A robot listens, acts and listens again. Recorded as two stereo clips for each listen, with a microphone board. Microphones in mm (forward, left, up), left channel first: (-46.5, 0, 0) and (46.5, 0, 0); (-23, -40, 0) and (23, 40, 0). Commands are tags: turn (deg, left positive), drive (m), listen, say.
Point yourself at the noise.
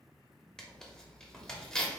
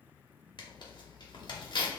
<turn deg="-100"/>
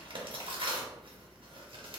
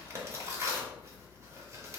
<say>Found it: tearing paper, straight ahead, 1 to 2 m away.</say>